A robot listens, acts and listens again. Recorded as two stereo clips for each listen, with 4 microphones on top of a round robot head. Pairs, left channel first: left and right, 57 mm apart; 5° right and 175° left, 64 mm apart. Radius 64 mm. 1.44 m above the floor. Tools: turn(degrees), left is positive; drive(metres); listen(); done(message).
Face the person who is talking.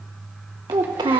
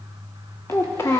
turn(degrees=-70)
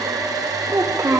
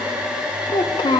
turn(degrees=-30)
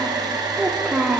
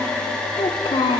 turn(degrees=-10)
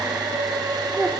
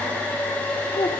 done("Facing the child speaking, under 1 m away.")